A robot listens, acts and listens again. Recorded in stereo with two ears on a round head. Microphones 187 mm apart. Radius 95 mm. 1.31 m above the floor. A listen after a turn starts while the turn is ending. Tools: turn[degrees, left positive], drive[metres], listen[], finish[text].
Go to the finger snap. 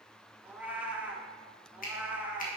Thought: The finger snap: about 45° left or 135° left.
Action: turn[45]
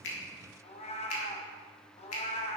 Thought: So it is at 90° left.
Action: turn[90]
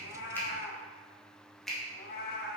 Action: drive[1.0]
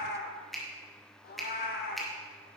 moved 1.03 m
Action: drive[1.0]
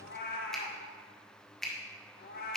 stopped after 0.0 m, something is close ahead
Action: finish[Arrived at the finger snap, straight ahead.]